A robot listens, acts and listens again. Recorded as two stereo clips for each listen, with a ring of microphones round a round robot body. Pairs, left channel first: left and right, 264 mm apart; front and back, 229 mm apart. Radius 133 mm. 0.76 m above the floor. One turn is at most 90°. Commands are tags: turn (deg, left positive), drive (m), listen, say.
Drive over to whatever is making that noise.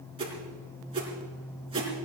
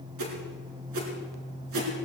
<turn deg="-90"/>
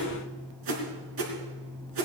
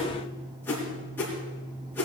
<turn deg="-85"/>
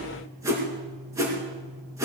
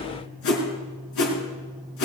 <turn deg="-10"/>
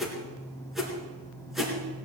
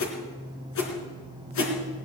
<drive m="1.0"/>
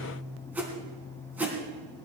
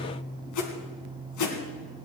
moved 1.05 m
<drive m="1.0"/>
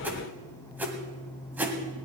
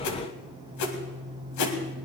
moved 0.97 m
<drive m="1.0"/>
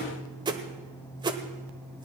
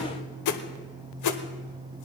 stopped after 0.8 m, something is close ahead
<turn deg="-15"/>
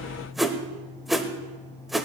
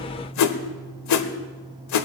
<say>Arrived at the whoosh, straight ahead.</say>